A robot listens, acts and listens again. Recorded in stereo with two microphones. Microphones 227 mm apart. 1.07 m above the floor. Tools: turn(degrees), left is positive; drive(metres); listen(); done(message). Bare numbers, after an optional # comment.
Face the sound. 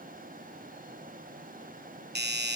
# The doorbell: about 50° right or 130° right.
turn(-50)
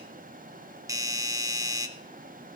# So it is at 20° right.
turn(-20)
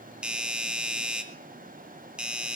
done("Facing the doorbell.")